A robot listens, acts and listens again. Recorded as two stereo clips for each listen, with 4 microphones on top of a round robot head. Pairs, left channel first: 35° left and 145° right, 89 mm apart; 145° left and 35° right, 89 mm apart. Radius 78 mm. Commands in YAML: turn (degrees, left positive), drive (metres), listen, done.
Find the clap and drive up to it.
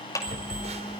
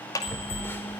turn: 90
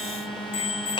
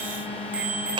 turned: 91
listen: true
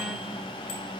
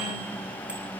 listen: true
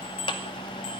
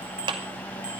drive: 1.0
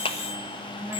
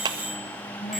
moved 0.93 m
turn: 10
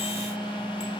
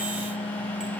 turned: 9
listen: true
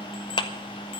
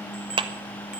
drive: 1.0
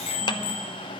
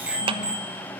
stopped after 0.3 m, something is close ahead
done: "I am next to the clap."